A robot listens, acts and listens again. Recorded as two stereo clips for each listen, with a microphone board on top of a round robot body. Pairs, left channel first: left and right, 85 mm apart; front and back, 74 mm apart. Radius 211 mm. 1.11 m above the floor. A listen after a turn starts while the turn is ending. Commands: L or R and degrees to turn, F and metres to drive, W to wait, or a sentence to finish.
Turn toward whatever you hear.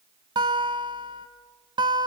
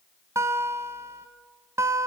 R125
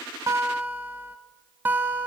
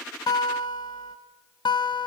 R20
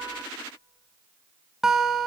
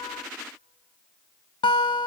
Facing the guitar, under 1 m away.